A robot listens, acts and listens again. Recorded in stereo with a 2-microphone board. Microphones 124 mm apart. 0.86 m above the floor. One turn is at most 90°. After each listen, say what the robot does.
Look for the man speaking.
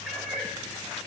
Keep listening.
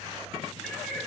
Keep listening.
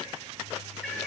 I can't make out a man speaking, only a cat meowing.